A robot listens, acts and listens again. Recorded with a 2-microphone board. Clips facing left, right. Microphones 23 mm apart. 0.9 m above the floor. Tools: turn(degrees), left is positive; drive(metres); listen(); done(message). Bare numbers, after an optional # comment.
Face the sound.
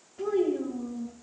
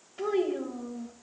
turn(-90)
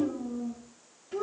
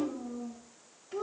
done("Facing the child speaking.")